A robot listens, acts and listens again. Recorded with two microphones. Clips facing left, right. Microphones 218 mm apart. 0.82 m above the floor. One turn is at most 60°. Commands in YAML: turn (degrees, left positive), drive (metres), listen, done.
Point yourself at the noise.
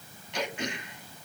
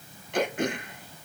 turn: -55
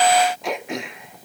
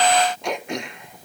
done: "Found it: throat clearing, straight ahead, under 1 m away."